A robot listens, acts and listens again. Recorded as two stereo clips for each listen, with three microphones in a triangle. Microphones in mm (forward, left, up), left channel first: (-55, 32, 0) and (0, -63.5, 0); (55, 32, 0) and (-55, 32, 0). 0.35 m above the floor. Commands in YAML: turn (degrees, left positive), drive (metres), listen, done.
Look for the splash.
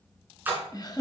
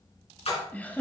turn: 10
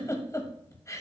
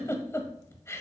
done: "Facing where the splash came from. I can't hear it now."